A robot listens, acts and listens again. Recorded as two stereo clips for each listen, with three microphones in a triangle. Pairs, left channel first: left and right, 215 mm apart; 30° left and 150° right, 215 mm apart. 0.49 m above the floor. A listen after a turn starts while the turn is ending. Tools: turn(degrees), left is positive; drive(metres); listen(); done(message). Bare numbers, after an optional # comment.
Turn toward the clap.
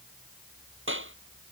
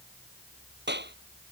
# The clap: 115° right.
turn(-115)
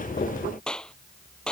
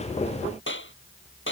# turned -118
done("Facing the clap.")